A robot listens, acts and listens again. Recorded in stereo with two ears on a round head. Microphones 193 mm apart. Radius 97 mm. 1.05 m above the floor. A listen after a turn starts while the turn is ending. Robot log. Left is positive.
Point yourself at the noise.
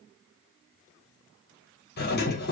note: The doorbell: about 50° left or 130° left.
cmd yaw +50
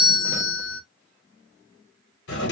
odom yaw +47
note: So it is at 70° left.
cmd yaw +70
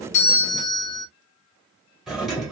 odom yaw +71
end: Facing the doorbell.